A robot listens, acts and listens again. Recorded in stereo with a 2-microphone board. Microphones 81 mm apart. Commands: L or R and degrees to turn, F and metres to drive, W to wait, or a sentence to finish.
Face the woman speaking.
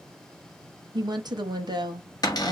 R60
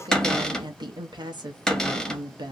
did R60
R65
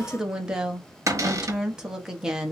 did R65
Facing the woman speaking.